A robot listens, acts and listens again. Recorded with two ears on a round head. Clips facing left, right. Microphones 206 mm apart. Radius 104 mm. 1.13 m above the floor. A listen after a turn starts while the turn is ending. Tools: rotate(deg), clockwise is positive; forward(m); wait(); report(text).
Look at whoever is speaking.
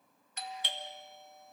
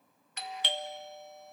wait()
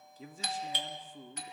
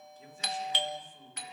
rotate(-65)
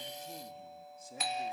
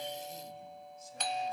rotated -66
rotate(-45)
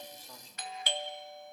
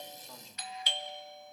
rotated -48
wait()
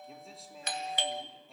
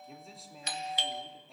report("Facing the man speaking, 2 to 4 m away.")